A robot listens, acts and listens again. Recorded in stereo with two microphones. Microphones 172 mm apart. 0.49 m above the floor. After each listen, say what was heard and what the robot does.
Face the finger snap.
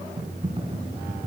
Keep listening.
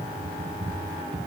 Keep listening.
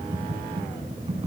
I can't make out a finger snap to turn to.